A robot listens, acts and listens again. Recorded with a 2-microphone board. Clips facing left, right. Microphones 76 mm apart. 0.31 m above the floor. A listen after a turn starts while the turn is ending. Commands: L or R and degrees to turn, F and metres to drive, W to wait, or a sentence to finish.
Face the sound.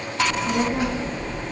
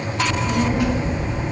L25
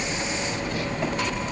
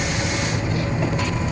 L130
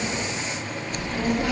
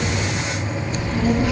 Found it: a child speaking, straight ahead, 2 to 4 m away.